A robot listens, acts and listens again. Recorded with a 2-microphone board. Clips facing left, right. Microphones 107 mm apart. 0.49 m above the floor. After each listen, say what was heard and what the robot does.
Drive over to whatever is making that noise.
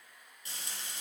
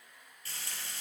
The frying: about 20° left or 160° left. Turn 20° left.
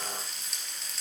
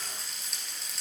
Drive 1.0 m forward.
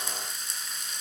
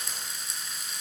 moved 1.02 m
Drive 1.0 m forward.
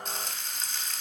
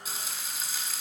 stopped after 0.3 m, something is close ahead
Arrived at the frying, straight ahead.